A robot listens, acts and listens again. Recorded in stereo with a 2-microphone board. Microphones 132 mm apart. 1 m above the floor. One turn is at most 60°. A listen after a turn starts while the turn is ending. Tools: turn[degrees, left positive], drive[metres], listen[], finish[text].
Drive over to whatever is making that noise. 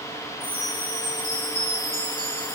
Thought: The chime: about 40° left or 140° left.
Action: turn[40]
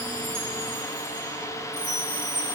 Thought: So it is at 100° left.
Action: turn[60]
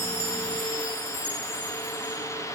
Thought: The chime is now 40° left.
Action: turn[40]
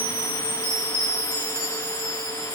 Thought: The chime is now 10° left.
Action: turn[10]
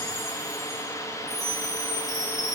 Action: drive[1.0]
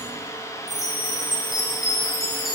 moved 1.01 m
Action: drive[1.0]
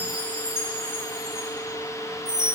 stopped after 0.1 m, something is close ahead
Thought: The chime is now 10° right.
Action: turn[-10]
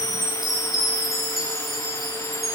Action: finish[I am next to the chime.]